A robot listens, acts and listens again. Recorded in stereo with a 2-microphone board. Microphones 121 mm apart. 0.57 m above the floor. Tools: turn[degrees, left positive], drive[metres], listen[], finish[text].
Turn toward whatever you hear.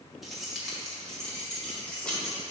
Action: turn[30]
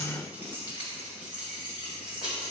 Action: finish[Found it: keys jangling, straight ahead, 2 to 4 m away.]